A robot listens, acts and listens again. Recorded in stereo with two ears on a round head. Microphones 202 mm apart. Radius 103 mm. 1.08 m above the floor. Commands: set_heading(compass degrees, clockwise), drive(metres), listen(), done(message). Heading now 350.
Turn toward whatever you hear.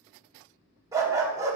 set_heading(20)
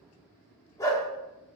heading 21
set_heading(6)
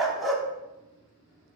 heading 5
done("Found it: a dog barking, straight ahead, under 1 m away.")